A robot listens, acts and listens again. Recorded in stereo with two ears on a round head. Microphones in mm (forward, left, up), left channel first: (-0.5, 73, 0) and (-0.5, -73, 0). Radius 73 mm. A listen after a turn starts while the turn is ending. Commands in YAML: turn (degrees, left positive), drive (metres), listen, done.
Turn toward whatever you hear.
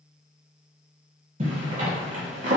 turn: -50
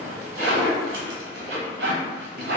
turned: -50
turn: -80
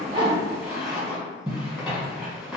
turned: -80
done: "Facing the zipper, 1 to 2 m away."